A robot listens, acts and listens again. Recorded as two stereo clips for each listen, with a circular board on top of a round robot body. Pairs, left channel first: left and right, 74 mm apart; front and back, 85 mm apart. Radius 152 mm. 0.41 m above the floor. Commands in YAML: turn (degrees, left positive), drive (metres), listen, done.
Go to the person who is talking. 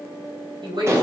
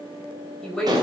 turn: -85
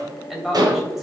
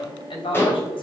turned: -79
drive: 1.0
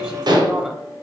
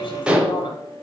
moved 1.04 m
turn: -15
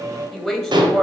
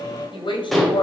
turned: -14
drive: 1.0
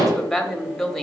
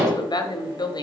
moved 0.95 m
drive: 1.0
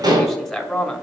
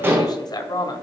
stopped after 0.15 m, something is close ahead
done: "I am next to the woman speaking."